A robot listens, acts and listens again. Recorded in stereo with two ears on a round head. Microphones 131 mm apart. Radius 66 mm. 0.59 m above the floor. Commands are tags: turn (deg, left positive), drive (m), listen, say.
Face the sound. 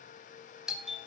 <turn deg="-30"/>
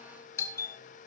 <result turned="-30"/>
<turn deg="25"/>
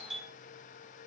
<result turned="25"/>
<say>Found it: a doorbell, straight ahead.</say>